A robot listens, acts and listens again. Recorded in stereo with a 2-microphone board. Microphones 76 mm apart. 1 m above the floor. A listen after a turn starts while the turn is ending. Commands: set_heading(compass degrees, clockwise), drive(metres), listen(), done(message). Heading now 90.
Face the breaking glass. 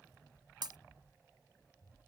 set_heading(160)
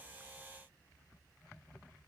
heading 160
listen()
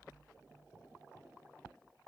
done("I heard breaking glass, but can't make it out now. It was about straight ahead or 40° right.")